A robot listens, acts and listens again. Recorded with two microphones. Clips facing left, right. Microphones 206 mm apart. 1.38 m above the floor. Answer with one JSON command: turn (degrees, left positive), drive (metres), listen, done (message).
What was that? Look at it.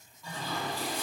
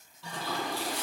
{"turn": -70}
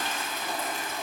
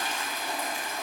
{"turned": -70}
{"turn": -10}
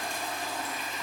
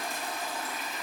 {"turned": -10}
{"done": "Facing the toilet flushing."}